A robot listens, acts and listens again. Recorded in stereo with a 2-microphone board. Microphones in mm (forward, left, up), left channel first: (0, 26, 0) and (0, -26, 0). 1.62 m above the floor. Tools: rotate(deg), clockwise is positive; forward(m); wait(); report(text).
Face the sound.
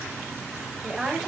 rotate(30)
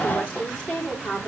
rotate(-30)
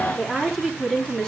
rotate(-10)
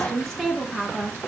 report("Found it: a woman speaking, straight ahead.")